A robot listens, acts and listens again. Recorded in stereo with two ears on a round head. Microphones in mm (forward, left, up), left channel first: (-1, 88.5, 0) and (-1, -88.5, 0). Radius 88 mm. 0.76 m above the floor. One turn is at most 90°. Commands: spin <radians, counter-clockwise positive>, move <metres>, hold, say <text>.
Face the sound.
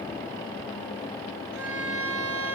spin -1.31
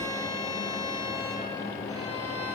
spin -0.35
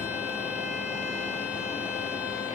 hold
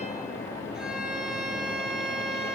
say Facing the violin.